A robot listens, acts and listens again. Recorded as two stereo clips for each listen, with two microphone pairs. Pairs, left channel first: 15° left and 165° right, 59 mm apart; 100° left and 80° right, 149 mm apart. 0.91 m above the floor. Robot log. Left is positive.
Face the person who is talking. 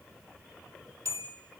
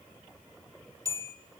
cmd idle
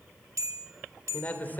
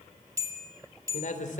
note: The man speaking: 75° left.
cmd yaw +75
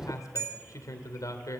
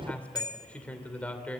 note: The man speaking is now 20° left.
cmd yaw +20
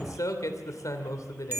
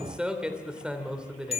end: Found it: a man speaking, straight ahead, 2 to 4 m away.